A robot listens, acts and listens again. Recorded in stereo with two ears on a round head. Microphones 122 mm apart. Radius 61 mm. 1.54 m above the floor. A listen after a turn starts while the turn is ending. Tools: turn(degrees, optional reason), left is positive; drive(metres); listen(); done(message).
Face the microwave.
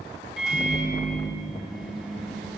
turn(degrees=30)
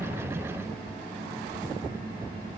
turn(degrees=-30, reason="So it is at 30° right.")
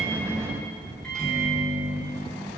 done("Facing the microwave.")